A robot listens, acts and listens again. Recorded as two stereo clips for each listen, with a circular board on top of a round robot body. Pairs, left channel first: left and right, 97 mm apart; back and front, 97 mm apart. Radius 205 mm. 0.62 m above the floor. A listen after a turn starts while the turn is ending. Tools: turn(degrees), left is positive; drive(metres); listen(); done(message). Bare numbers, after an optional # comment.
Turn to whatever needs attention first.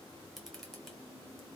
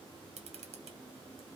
listen()
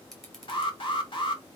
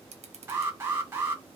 # The alarm: 65° left.
turn(65)
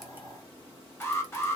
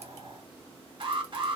# The alarm is now 25° left.
turn(25)
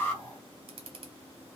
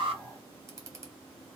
listen()
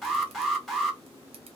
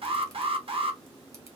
done("Found it: an alarm, straight ahead, 2 to 4 m away.")